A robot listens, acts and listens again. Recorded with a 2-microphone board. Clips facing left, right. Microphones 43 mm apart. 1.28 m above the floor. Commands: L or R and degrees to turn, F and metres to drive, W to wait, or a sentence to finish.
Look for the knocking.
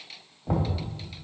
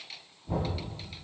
L90
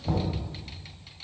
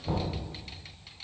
Found it: knocking, straight ahead, 2 to 4 m away.